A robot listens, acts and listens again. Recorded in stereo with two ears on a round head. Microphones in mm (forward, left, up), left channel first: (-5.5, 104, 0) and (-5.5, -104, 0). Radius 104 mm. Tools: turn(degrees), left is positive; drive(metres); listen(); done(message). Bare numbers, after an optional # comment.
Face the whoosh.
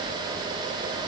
listen()
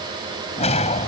# The whoosh: about 30° left or 150° left.
turn(30)
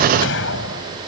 # So it is at 120° left.
turn(120)
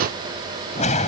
# The whoosh is now 30° left.
turn(30)
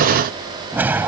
# The whoosh is now 10° right.
turn(-10)
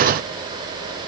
listen()
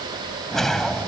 done("Facing the whoosh.")